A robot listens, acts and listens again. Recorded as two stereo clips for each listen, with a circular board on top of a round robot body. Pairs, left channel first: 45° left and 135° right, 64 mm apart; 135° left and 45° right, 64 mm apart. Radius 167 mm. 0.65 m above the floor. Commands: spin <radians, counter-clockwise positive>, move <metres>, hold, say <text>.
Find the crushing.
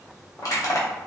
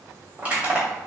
spin 0.35
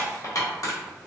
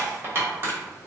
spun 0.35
spin 0.17
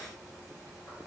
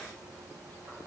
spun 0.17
hold
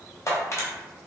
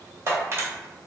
say Found it: crushing, straight ahead.